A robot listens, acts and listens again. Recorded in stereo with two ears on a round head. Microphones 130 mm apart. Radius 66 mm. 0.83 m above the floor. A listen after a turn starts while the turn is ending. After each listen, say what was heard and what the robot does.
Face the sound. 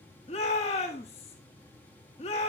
The shout: about 45° left or 135° left. Turn 45° left.
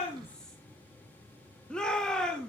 Found it: a shout, straight ahead.